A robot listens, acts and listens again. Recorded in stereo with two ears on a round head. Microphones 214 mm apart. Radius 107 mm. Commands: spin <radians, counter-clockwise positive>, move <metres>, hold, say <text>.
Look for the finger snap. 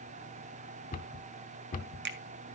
spin -0.79
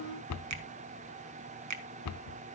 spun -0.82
spin -1.48
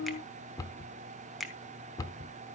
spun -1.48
say Found it: a finger snap, straight ahead, 1 to 2 m away.